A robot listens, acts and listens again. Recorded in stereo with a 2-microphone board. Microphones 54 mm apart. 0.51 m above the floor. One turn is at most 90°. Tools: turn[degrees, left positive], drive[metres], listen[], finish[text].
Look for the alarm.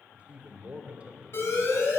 Thought: The alarm: about 60° left or 120° left.
Action: turn[60]
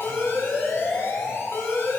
Thought: So it is at 50° left.
Action: turn[50]
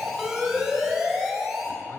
Thought: The alarm is now 10° right.
Action: turn[-10]
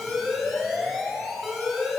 Action: finish[Facing the alarm.]